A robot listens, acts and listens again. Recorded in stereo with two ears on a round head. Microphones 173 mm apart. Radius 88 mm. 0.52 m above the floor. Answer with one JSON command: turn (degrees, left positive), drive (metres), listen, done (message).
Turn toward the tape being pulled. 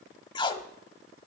{"turn": 25}
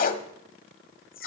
{"turn": 130}
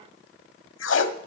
{"turn": 65}
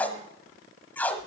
{"turn": 10}
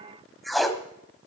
{"done": "Facing the tape being pulled."}